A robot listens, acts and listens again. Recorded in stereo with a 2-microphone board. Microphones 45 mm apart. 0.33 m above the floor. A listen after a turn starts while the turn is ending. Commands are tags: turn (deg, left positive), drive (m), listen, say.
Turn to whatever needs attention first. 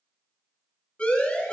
<turn deg="25"/>
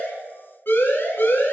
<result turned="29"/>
<turn deg="130"/>
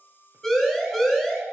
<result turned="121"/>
<say>Found it: a siren, straight ahead, over 4 m away.</say>